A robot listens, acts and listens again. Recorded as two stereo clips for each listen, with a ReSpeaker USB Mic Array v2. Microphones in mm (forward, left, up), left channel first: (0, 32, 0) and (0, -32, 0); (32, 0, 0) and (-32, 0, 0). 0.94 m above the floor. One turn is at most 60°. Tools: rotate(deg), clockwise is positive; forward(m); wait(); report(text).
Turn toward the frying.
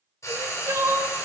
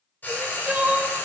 rotate(-60)
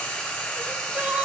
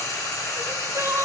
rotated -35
rotate(-25)
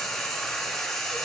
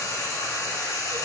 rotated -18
report("Found it: frying, straight ahead.")